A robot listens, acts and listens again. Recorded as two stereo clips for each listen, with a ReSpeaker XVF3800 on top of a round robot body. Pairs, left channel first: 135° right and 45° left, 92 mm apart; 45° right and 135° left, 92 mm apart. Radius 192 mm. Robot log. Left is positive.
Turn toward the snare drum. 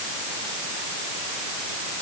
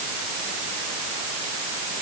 cmd idle
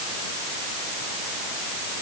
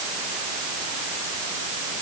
cmd idle
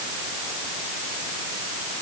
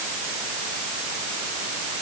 end: I can't make out a snare drum to turn to.